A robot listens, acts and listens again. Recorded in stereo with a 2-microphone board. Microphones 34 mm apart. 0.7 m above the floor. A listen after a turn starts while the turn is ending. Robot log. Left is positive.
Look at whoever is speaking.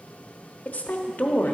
note: The woman speaking: about 50° left or 130° left.
cmd yaw +50
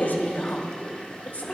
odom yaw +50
note: So it is at 65° left.
cmd yaw +65
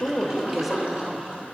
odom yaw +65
end: Found it: a woman speaking, straight ahead.